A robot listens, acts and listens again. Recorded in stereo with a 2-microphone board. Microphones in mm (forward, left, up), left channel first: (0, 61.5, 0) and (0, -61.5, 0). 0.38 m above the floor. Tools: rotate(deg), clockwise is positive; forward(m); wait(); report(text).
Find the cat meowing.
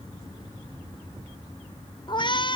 rotate(-40)
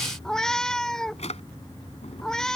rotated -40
report("Facing the cat meowing.")